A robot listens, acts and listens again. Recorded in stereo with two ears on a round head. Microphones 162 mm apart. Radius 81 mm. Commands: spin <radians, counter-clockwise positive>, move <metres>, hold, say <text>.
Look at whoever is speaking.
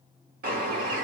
hold
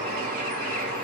hold
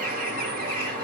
say I can't make out anyone speaking, only a bird.